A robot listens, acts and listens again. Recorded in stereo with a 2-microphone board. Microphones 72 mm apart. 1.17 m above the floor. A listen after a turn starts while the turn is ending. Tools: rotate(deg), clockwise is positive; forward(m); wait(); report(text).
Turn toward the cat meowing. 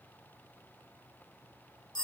wait()
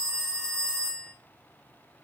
wait()
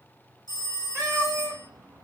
rotate(35)
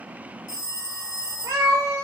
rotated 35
rotate(45)
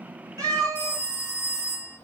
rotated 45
rotate(50)
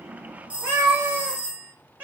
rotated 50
rotate(25)
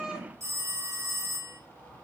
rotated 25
wait()
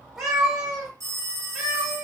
report("Facing the cat meowing.")